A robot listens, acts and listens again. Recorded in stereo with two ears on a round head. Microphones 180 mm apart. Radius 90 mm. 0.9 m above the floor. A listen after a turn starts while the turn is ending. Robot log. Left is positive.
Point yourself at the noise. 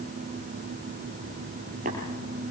note: The tapping: about 40° right or 140° right.
cmd yaw -40
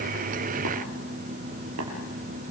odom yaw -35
cmd idle
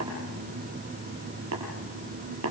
note: So it is at 105° right.
cmd yaw -105
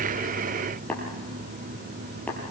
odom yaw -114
end: Found it: tapping, straight ahead, over 4 m away.